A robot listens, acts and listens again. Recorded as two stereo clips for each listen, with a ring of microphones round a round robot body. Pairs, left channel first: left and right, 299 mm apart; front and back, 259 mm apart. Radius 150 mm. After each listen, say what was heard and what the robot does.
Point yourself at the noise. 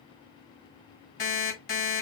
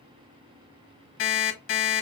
The alarm clock: 35° left. Turn 35° left.
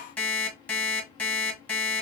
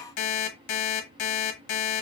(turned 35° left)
Facing the alarm clock, 1 to 2 m away.